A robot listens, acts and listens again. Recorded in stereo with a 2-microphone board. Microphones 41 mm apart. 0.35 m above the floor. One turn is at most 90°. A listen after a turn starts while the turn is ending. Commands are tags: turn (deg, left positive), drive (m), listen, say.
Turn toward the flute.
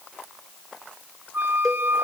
<turn deg="-70"/>
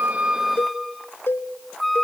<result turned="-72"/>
<say>Facing the flute, under 1 m away.</say>